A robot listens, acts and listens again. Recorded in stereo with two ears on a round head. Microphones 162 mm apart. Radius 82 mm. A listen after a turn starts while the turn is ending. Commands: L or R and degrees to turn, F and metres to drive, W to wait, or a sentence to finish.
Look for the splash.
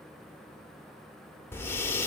W
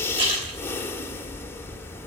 R30
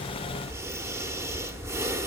W
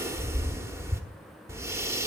I heard a splash, but can't make it out now. It was about straight ahead or 120° right.